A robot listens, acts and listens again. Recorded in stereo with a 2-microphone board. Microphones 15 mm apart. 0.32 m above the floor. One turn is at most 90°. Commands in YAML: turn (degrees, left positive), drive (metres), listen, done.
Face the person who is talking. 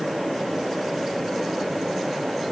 listen: true
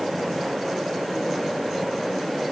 listen: true
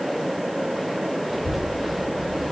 turn: -30
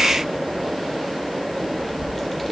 turn: 15
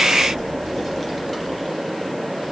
done: "Facing the child speaking, over 4 m away."